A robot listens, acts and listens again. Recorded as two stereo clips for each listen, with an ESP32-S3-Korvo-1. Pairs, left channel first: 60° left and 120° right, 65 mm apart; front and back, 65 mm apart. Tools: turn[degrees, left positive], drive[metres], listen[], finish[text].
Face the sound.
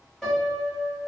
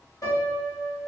Thought: The piano: 20° right.
Action: turn[-20]
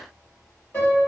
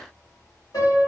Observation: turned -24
Action: finish[Facing the piano, 1 to 2 m away.]